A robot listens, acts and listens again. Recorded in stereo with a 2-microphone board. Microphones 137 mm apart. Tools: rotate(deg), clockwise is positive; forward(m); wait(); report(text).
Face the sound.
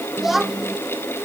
rotate(-30)
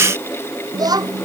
rotate(30)
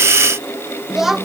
report("Facing the child speaking.")